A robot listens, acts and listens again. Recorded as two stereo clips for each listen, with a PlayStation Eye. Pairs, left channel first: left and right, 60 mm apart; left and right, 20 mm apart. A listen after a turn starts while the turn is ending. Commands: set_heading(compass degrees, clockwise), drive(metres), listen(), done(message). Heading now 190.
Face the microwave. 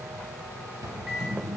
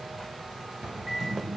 set_heading(220)
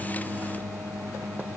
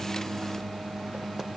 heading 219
set_heading(4)
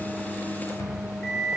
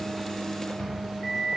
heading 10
set_heading(0)
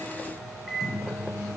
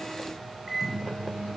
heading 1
done("Found it: a microwave, straight ahead, 2 to 4 m away.")